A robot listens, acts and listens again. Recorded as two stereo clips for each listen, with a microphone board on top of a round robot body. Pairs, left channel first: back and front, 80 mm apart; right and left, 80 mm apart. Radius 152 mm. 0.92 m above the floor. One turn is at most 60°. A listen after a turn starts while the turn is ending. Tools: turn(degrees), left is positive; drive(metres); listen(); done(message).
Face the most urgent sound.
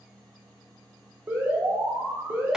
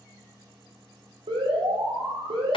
turn(degrees=60)
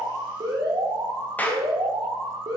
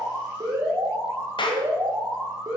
turn(degrees=40)
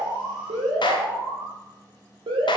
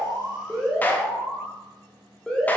turn(degrees=-10)
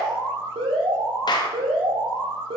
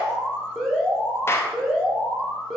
done("Found it: an alarm, straight ahead.")